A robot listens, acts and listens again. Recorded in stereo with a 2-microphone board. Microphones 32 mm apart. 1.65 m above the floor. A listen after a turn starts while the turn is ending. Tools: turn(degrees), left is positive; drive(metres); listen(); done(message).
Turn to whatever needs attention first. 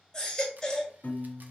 turn(degrees=20)
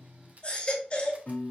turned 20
turn(degrees=140)
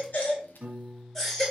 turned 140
turn(degrees=15)
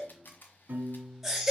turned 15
done("Found it: a baby crying, straight ahead, 1 to 2 m away.")